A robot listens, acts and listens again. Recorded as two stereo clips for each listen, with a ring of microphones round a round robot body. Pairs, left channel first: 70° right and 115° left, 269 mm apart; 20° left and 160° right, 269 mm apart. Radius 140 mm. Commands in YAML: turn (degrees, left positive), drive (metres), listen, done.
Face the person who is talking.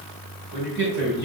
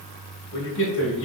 turn: 60
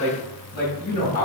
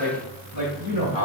turn: -40
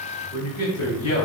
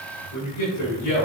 done: "Found it: a man speaking, straight ahead."